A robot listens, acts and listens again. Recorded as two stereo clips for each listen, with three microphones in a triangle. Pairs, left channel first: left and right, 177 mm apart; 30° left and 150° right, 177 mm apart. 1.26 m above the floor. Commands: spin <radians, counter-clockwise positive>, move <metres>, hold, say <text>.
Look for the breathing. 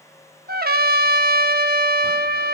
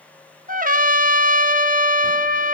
hold
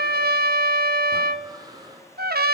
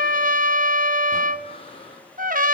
spin -0.44
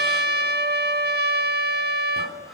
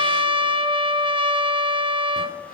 hold
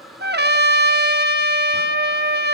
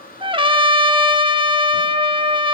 say Facing the breathing, over 4 m away.